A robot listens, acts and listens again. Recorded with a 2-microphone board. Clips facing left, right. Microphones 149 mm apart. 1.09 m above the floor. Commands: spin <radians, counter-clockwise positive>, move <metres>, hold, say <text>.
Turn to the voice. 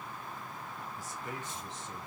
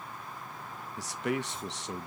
spin -1.57
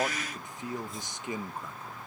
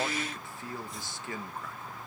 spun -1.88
spin 0.35
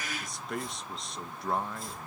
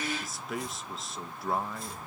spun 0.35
say Found it: a man speaking, straight ahead, under 1 m away.